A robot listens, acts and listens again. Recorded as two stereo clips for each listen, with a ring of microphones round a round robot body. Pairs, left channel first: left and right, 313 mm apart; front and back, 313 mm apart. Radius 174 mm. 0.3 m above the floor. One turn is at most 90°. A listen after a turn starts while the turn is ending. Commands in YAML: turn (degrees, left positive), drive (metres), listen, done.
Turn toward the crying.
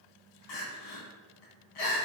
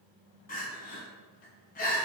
turn: 65
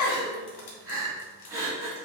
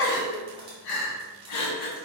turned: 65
turn: -10
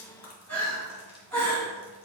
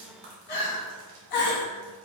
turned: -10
done: "Facing the crying, 1 to 2 m away."